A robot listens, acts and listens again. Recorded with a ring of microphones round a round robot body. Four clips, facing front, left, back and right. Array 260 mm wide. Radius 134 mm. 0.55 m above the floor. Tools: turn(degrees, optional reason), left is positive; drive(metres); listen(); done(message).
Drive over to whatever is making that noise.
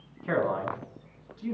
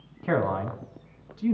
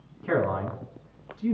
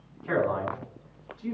turn(degrees=85, reason="The man speaking: 85° left.")
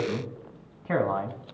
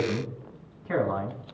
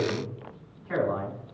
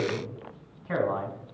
turn(degrees=10, reason="The man speaking is now 10° left.")
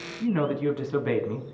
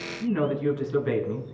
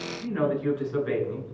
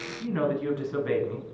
drive(metres=1.0)
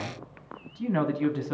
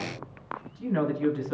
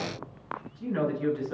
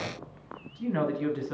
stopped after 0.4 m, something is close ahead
done("Something is in my way. I am facing the man speaking but have not reached it.")